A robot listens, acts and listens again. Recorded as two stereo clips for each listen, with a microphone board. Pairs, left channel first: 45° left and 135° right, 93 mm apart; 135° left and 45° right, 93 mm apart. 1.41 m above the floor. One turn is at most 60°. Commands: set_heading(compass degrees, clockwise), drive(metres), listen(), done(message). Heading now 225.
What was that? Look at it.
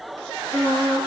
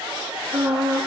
set_heading(285)
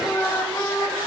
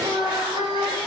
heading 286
set_heading(296)
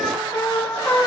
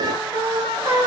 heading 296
done("Facing the singing, over 4 m away.")